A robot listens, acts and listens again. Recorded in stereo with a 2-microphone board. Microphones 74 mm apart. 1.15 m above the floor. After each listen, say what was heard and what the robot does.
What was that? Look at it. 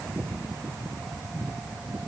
Keep listening.
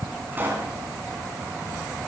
The pop: about 25° right or 155° right. Turn 25° right.
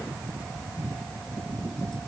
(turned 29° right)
Keep listening.
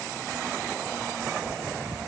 I heard a pop, but can't make it out now. It was about straight ahead or 125° right.